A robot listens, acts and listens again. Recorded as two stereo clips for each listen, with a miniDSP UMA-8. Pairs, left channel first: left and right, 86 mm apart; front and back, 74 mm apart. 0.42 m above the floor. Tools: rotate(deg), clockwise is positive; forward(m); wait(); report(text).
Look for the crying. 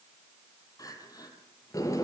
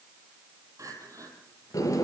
rotate(-140)
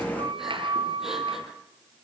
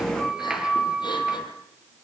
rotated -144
wait()
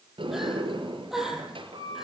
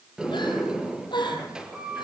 report("Found it: crying, straight ahead.")